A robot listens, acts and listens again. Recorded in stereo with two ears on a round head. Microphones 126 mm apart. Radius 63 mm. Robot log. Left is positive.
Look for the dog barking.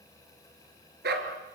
cmd yaw -90
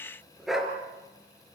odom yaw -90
end: Facing the dog barking, 2 to 4 m away.